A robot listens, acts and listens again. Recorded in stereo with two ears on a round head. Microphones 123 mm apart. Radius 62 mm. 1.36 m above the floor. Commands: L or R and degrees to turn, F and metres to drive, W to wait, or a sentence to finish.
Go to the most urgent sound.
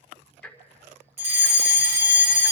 R55
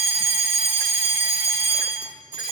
R65
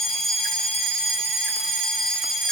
F1.0
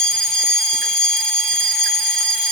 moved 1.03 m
F1.0
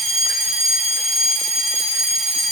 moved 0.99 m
F1.0
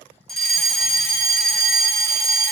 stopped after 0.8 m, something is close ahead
Arrived at the fire alarm, straight ahead.